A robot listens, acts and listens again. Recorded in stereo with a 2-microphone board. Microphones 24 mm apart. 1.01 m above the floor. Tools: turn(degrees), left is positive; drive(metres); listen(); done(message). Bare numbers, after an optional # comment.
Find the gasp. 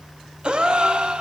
# The gasp: about 40° right or 140° right.
turn(-40)
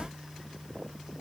listen()
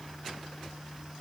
done("I heard a gasp, but can't make it out now. It was about straight ahead or 100° right.")